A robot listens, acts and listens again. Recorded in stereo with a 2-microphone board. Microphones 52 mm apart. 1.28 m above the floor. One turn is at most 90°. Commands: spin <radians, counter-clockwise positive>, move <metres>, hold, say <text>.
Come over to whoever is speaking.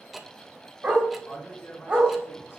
spin 0.87
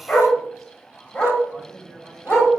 move 1.0
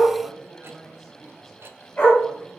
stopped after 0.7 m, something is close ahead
say Something is in my way. I am facing the man speaking but have not reached it.